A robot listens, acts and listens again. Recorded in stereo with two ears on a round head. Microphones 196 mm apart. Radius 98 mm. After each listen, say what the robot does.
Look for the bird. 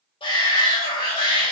Keep listening.
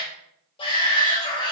Keep listening.
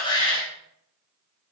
I can't make out a bird to turn to.